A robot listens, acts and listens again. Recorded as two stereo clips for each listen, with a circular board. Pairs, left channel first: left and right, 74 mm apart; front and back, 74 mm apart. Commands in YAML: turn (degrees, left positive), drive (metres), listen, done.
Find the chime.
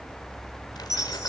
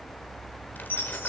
turn: -110
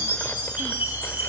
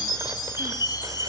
turn: -25
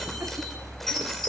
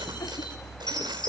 done: "Found it: a chime, straight ahead."